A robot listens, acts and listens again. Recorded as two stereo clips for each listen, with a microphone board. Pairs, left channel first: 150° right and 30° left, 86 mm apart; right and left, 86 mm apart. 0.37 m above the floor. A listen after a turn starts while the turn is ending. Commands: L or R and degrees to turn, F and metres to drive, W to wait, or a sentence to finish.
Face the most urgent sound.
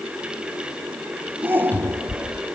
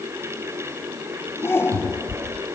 R35
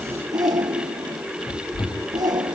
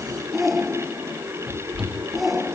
Found it: a shout, straight ahead.